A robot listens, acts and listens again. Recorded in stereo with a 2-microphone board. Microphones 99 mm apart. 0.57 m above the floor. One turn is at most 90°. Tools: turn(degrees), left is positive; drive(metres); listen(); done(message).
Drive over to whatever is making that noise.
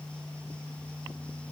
listen()
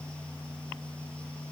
listen()
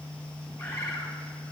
turn(degrees=25)
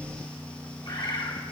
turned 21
turn(degrees=90)
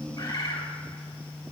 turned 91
turn(degrees=40)
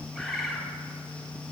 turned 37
drive(metres=1.0)
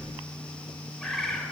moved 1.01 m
drive(metres=1.0)
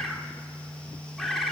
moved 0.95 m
drive(metres=1.0)
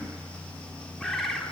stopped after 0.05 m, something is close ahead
done("I am next to the bird.")